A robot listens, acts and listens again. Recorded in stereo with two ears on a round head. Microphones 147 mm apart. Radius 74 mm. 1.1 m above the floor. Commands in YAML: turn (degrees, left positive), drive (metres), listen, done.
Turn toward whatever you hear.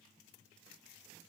listen: true
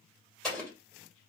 turn: 30
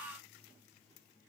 listen: true
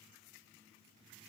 done: "I heard an explosion, but can't make it out now. It was about 25° right or 145° left."